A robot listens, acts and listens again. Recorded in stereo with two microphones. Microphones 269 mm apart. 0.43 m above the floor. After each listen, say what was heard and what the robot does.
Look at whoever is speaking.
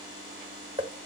Keep listening.
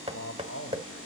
The man speaking: about 60° left or 120° left. Turn 60° left.
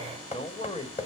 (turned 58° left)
So it is at 25° left. Turn 25° left.
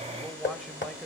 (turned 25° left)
Keep listening.
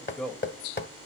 Found it: a man speaking, straight ahead.